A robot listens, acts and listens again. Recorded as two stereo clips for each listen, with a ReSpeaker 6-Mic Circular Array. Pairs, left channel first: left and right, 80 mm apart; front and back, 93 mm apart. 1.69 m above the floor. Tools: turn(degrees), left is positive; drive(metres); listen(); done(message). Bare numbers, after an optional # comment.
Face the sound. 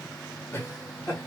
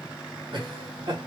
# The laughter: 150° left.
turn(150)
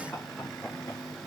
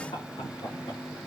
# The laughter is now 20° left.
turn(20)
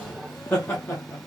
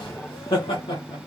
# The laughter is now 20° left.
turn(20)
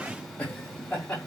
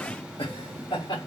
# The laughter is now 15° left.
turn(15)
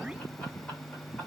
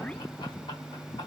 listen()
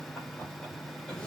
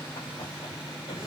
listen()
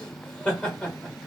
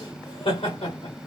# The laughter is now 10° left.
turn(10)
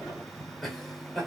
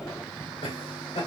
done("Facing the laughter.")